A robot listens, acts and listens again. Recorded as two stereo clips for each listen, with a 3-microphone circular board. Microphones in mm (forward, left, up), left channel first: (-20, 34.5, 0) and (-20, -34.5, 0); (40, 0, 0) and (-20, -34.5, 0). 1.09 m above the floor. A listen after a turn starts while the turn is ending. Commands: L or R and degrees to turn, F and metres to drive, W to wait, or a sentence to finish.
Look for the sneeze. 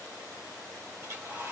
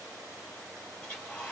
W
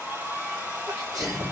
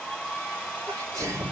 R115
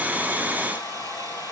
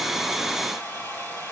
I heard a sneeze from this way, but can't make it out now.